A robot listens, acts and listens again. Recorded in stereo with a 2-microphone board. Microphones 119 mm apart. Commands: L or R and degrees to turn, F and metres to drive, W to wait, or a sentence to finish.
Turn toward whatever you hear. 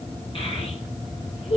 L55
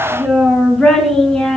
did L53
Facing the child speaking.